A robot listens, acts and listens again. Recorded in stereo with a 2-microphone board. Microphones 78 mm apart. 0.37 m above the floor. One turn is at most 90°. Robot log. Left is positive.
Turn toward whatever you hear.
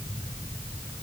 cmd idle
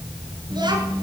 note: The child speaking: about 60° right or 120° right.
cmd yaw -60
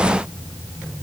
cmd idle
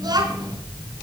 note: So it is at 60° right.
cmd yaw -60
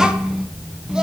note: The child speaking is now 10° right.
cmd yaw -10
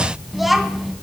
end: Found it: a child speaking, straight ahead.